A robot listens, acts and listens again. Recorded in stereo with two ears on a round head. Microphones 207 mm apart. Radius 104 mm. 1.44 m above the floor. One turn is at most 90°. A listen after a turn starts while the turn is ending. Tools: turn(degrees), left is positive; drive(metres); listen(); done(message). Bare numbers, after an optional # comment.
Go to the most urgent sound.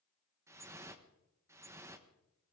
listen()
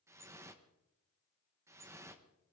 listen()
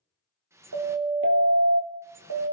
# The siren: about 70° right or 110° right.
turn(-70)
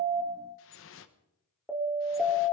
drive(1.0)
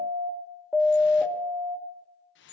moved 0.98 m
drive(1.0)
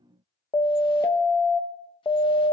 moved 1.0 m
# The siren is now 15° left.
turn(15)
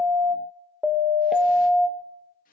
drive(1.0)
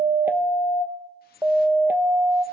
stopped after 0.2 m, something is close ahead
# The siren is now 10° right.
turn(-10)
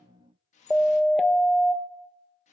done("Arrived at the siren, straight ahead.")